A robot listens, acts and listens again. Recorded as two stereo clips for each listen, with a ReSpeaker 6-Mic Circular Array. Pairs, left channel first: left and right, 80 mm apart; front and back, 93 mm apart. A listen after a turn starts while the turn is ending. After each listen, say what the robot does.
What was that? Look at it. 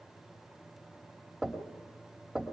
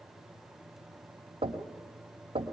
Turn 180° left.
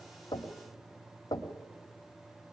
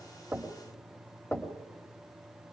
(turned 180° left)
Turn 70° left.
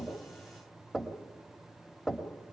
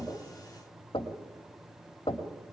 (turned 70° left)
Found it: knocking, straight ahead, 1 to 2 m away.